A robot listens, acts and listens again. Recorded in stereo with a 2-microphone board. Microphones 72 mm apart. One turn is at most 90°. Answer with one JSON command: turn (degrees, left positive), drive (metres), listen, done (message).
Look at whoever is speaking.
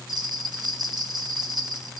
{"listen": true}
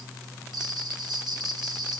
{"listen": true}
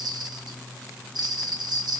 {"done": "I can't make out anyone speaking to turn to."}